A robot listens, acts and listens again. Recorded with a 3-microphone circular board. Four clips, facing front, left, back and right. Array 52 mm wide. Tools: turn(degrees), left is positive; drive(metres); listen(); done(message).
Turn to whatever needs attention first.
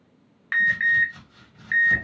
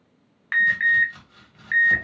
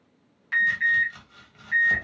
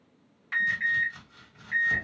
turn(degrees=55)
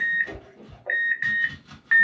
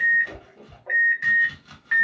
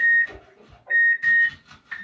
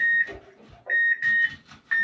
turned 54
done("Found it: an alarm, straight ahead, 1 to 2 m away.")